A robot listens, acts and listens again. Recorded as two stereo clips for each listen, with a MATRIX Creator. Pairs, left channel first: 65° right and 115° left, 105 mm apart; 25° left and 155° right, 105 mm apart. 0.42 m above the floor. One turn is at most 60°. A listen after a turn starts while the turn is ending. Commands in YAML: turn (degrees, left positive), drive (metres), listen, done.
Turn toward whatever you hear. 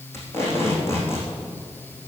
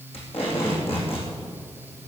done: "Found it: tape being pulled, straight ahead, over 4 m away."